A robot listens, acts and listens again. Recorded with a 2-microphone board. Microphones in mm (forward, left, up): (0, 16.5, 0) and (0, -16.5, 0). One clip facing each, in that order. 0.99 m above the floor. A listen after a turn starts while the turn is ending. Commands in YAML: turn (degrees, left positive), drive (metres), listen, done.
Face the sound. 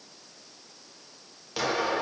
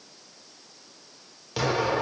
turn: -30
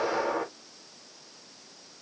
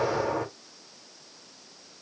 turn: 25
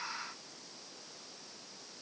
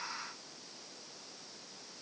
done: "Facing where the explosion came from. I can't hear it now."